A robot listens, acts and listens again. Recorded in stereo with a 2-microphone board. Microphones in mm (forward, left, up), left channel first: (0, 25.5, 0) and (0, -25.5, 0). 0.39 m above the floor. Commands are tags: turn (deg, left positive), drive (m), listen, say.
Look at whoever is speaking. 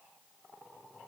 <listen/>
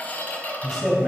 <turn deg="30"/>
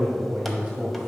<turn deg="-30"/>
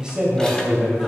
<turn deg="-15"/>
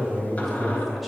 <say>Facing the man speaking, 1 to 2 m away.</say>